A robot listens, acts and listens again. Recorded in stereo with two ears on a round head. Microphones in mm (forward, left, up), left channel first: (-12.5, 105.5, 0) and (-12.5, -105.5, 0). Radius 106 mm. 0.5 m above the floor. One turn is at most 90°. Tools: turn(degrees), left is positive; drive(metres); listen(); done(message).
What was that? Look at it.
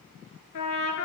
turn(degrees=90)
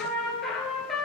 done("Facing the trumpet.")